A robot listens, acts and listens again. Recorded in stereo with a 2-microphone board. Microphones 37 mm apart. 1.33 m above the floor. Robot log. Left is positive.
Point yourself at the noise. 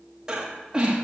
note: The breathing: about 20° right or 160° right.
cmd yaw -20
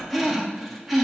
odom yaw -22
end: Found it: breathing, straight ahead, 1 to 2 m away.